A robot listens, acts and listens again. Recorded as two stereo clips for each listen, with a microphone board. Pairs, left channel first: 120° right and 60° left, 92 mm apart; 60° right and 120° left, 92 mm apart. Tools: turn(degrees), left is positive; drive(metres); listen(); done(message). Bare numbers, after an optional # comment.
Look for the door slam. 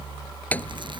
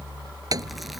# The door slam: 165° left.
turn(165)
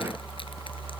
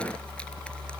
done("Facing where the door slam came from. I can't hear it now.")